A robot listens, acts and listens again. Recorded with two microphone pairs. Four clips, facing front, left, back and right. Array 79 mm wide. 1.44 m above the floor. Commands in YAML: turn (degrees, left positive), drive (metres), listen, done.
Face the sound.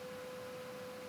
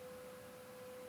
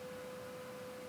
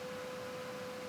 listen: true
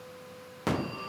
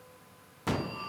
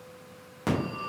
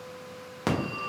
turn: -90
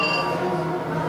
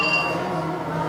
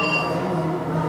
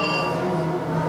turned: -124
turn: 35
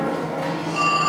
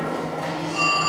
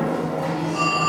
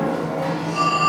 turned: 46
done: "Facing the phone ringing."